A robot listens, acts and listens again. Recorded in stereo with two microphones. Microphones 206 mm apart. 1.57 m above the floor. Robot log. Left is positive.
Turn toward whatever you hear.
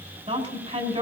note: The woman speaking: about 30° right or 150° right.
cmd yaw -30
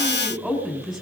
end: Facing the woman speaking.